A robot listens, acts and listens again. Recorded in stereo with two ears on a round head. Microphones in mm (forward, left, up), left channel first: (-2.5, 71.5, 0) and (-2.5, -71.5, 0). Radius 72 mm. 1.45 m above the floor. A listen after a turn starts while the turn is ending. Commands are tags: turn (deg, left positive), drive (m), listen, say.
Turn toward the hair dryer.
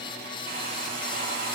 <turn deg="-55"/>
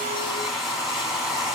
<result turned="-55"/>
<say>Found it: a hair dryer, straight ahead, 1 to 2 m away.</say>